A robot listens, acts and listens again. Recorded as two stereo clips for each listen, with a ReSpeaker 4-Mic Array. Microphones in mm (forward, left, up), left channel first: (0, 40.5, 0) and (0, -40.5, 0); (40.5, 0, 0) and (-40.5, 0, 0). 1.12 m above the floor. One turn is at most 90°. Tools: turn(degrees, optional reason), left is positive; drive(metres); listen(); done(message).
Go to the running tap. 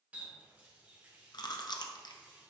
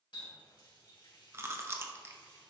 turn(degrees=-20, reason="The running tap: 20° right.")
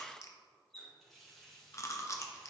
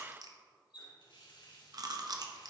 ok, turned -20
drive(metres=1.0)
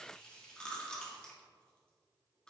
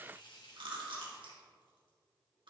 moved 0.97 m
turn(degrees=15, reason="The running tap is now 15° left.")
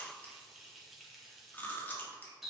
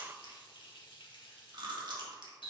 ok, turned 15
drive(metres=1.0)
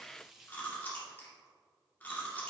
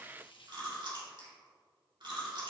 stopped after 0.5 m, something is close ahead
done("I am next to the running tap.")